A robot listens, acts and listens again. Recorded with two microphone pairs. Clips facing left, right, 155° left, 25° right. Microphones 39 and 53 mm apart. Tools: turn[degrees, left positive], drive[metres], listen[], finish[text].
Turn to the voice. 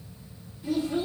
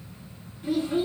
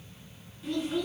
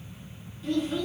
Thought: The child speaking: 120° right.
Action: turn[-120]
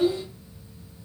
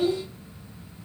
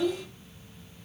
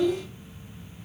Thought: The child speaking is now 15° left.
Action: turn[15]
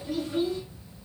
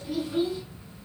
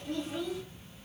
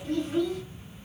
Action: finish[Facing the child speaking.]